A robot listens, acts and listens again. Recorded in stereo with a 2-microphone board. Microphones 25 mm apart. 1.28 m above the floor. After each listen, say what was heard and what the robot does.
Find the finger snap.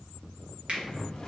The finger snap: about 50° right or 130° right. Turn 50° right.
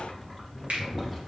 So it is at 80° right. Turn 80° right.
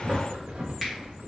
The finger snap is now 10° right. Turn 10° right.
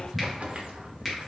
Found it: a finger snap, straight ahead, 1 to 2 m away.